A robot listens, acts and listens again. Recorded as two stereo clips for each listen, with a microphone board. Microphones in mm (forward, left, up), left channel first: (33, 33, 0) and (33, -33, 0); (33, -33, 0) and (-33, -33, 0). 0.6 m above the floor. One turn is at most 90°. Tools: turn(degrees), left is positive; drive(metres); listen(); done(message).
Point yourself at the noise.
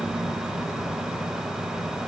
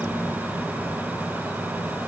listen()
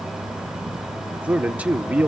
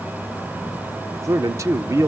turn(degrees=-90)
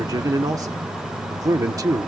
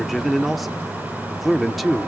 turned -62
turn(degrees=-90)
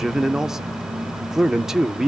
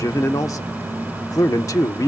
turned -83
done("Facing the man speaking.")